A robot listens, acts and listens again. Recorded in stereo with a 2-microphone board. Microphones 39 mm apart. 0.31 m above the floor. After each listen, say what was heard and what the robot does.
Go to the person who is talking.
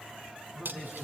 Turn 30° right.
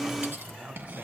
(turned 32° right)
So it is at 140° right. Turn 140° right.
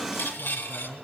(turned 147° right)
The man speaking is now 10° left. Turn 10° left.
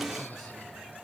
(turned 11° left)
Keep listening.
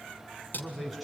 Drive 1.0 m forward.
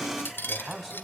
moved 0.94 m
Drive 1.0 m forward.
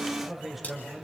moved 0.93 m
The man speaking is now 10° right. Turn 10° right.
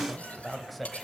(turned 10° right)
Drive 1.0 m forward.
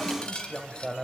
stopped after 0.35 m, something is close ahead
Arrived at the man speaking, straight ahead.